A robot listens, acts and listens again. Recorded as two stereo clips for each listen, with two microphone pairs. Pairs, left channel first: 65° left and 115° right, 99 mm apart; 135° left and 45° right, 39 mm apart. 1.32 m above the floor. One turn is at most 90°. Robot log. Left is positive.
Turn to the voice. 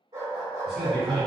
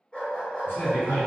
note: The man speaking: 160° left.
cmd yaw +90
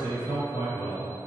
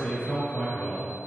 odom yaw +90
note: The man speaking is now 90° left.
cmd yaw +90
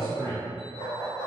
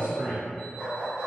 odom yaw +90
note: The man speaking is now 20° right.
cmd yaw -20
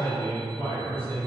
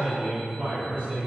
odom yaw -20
end: Facing the man speaking, 1 to 2 m away.